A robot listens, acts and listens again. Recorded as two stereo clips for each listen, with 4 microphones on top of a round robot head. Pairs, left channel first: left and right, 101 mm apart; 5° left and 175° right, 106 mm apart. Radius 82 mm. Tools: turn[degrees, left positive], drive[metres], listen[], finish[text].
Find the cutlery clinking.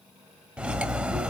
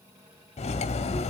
Thought: The cutlery clinking: 10° right.
Action: turn[-10]
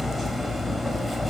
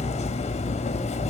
Action: finish[Facing the cutlery clinking, under 1 m away.]